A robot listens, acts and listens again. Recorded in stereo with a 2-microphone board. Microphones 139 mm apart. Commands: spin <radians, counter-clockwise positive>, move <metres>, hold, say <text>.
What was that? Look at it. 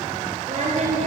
spin -0.96
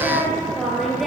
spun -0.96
say Facing the singing, over 4 m away.